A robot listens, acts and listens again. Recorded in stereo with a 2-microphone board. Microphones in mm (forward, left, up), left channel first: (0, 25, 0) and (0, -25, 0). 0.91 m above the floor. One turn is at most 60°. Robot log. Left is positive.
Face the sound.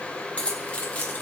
note: The keys jangling: about 30° left or 150° left.
cmd yaw +30
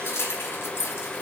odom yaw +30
note: So it is at 120° left.
cmd yaw +60
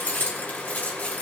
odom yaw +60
note: The keys jangling is now 35° left.
cmd yaw +35
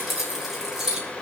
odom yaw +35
note: The keys jangling is now 10° right.
cmd yaw -10
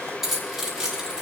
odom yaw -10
note: The keys jangling is now 10° right.
cmd yaw -10
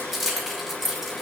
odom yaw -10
end: Facing the keys jangling, 2 to 4 m away.